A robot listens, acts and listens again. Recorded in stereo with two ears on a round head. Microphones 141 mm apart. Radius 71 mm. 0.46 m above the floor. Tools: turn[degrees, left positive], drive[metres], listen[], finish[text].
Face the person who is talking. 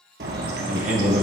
Thought: The man speaking: about 50° right or 130° right.
Action: turn[-50]
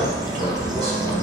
Action: listen[]
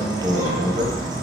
Thought: So it is at 70° right.
Action: turn[-70]
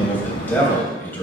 Thought: The man speaking is now 10° left.
Action: turn[10]
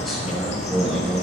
Action: finish[Found it: a man speaking, straight ahead, 2 to 4 m away.]